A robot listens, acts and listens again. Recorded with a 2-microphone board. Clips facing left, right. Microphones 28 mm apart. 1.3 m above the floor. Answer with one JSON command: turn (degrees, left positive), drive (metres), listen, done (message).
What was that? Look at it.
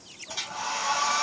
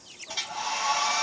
{"turn": -25}
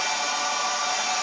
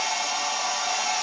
{"done": "Facing the hair dryer, 2 to 4 m away."}